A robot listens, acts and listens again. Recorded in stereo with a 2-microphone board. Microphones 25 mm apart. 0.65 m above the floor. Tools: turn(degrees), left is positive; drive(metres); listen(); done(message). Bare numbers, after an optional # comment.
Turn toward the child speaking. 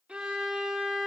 listen()
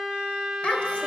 # The child speaking: about 55° left or 125° left.
turn(55)
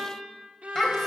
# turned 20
# So it is at 25° left.
turn(25)
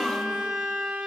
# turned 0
# Nothing new. It was at 25° left.
turn(25)
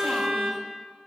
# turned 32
# Nothing new. It was at 10° right.
turn(-10)
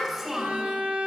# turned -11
# The child speaking is now 10° right.
turn(-10)
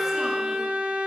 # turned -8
listen()
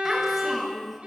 done("Found it: a child speaking, straight ahead, 2 to 4 m away.")